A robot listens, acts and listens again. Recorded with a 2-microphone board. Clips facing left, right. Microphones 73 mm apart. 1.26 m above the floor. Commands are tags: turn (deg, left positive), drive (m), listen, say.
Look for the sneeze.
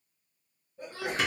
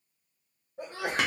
<turn deg="-75"/>
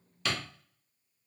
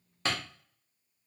<listen/>
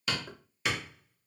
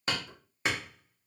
<say>I heard a sneeze, but can't make it out now. It was about straight ahead or 30° right.</say>